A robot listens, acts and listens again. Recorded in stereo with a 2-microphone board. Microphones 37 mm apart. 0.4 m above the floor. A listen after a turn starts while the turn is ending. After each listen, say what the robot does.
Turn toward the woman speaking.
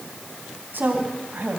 Turn 65° right.
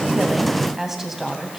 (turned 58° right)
Turn 10° right.
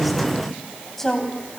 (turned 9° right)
Turn 10° left.
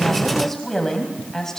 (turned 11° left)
Turn 15° left.
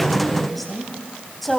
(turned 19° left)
Found it: a woman speaking, straight ahead.